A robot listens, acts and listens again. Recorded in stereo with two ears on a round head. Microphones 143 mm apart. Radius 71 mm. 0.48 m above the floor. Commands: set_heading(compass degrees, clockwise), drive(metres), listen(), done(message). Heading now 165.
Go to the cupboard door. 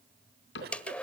set_heading(75)
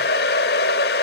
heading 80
listen()
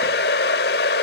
listen()
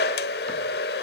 done("Facing where the cupboard door came from. I can't hear it now. I did not reach it.")